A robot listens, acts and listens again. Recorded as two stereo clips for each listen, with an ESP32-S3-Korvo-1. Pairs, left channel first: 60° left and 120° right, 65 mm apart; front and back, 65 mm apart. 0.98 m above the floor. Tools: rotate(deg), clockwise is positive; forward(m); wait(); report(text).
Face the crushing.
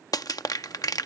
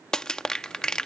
rotate(-80)
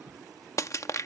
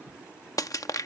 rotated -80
rotate(-25)
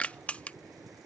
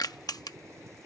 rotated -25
rotate(10)
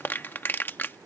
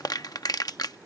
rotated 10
report("Facing the crushing.")